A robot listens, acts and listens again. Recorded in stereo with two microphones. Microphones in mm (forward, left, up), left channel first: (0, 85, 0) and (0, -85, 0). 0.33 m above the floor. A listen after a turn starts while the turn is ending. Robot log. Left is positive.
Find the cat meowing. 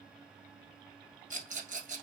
cmd idle
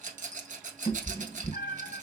note: The cat meowing: about 50° left or 130° left.
cmd yaw +50
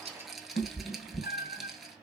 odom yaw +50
note: So it is at 80° left.
cmd yaw +80
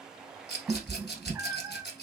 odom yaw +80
note: The cat meowing is now 10° right.
cmd yaw -10
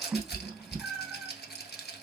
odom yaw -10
end: Found it: a cat meowing, straight ahead.